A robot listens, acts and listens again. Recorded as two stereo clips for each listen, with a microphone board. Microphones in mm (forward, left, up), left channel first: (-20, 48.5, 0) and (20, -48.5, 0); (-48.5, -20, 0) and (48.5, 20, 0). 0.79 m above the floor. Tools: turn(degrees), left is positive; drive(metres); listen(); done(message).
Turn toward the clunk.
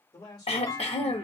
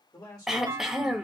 turn(degrees=70)
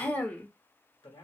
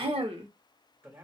done("Facing where the clunk came from. I can't hear it now.")